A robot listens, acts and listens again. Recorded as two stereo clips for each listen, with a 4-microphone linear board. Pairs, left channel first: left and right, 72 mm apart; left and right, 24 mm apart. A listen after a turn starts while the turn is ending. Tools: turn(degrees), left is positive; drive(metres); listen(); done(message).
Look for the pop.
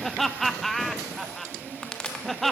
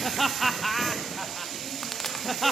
turn(degrees=30)
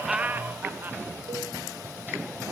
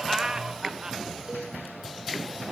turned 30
listen()
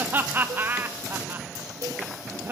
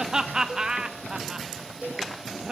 done("I heard a pop, but can't make it out now. It was about 20° right or 140° left.")